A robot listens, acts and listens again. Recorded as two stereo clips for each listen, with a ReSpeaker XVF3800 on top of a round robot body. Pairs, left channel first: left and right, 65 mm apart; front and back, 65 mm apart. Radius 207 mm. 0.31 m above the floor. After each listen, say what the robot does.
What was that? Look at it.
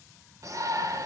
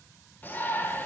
Turn 60° right.
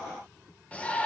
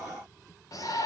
Turn 25° left.
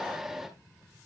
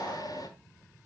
Facing the shout.